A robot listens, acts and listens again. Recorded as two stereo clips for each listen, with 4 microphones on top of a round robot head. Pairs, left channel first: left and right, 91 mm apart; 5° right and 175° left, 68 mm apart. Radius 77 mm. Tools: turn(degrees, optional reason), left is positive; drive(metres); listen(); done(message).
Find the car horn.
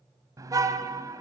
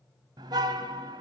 turn(degrees=-145, reason="The car horn: 145° right.")
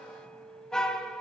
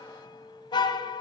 done("Found it: a car horn, straight ahead.")